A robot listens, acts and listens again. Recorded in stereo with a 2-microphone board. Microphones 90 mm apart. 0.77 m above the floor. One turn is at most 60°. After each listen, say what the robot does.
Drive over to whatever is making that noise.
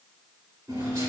Turn 60° right.
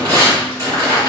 Turn 50° right.
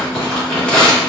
Turn 20° left.
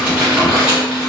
Drive 1.0 m forward.
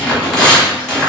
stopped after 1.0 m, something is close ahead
I am next to the tearing paper.